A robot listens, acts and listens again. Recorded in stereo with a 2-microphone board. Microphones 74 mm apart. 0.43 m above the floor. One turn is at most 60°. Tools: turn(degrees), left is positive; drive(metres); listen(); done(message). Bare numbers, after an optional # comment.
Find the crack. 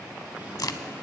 # The crack: about 60° left or 120° left.
turn(60)
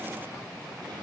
listen()
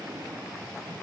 done("I heard a crack, but can't make it out now. It was about straight ahead or 60° left.")